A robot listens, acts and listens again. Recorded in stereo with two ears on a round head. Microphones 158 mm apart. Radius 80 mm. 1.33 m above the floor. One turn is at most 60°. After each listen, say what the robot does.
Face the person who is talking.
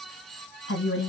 Turn 60° left.
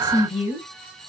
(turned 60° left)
Turn 30° left.
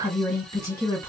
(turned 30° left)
Turn 20° left.
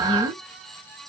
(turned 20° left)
Keep listening.
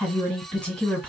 Facing the woman speaking, 1 to 2 m away.